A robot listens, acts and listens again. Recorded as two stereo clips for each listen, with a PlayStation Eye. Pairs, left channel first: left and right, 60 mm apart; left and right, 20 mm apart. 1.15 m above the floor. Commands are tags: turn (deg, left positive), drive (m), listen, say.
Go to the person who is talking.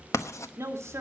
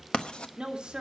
<turn deg="-55"/>
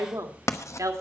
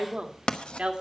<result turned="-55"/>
<turn deg="-70"/>
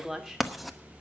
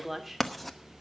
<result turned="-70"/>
<turn deg="-10"/>
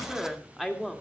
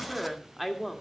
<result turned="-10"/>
<drive m="1.0"/>
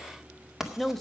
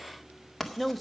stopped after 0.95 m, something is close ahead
<say>Arrived at the woman speaking, straight ahead.</say>